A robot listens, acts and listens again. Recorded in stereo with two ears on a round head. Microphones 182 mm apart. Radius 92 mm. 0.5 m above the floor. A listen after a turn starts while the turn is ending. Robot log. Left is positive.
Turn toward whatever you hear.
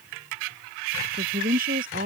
note: The woman speaking: about 45° right or 135° right.
cmd yaw -45
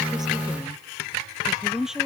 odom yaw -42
end: Facing the woman speaking.